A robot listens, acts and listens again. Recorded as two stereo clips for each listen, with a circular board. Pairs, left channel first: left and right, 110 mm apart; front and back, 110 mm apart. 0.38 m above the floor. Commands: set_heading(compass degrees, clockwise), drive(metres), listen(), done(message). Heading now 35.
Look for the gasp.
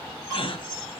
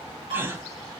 set_heading(280)
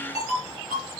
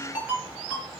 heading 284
done("Facing where the gasp came from. I can't hear it now.")